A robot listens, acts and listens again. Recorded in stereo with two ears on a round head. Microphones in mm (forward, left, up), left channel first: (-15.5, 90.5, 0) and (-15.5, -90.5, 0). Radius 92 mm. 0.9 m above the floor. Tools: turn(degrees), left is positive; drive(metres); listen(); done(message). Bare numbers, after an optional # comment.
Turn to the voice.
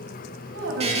turn(-90)
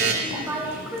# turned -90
done("Facing the woman speaking, over 4 m away.")